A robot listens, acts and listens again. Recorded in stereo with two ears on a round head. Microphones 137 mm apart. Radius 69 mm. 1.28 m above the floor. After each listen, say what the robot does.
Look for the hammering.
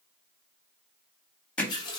Turn 30° left.
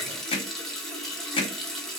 Turn 140° left.
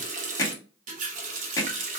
Turn 20° left.
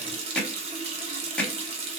Facing the hammering.